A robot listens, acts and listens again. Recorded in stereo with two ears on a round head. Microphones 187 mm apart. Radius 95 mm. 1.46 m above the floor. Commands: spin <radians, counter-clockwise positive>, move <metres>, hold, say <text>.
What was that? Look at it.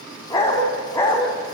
spin 0.52
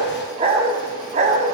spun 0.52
spin -0.61
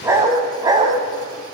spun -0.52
spin -0.35
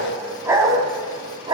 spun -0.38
spin -0.35
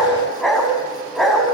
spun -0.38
say Facing the dog barking.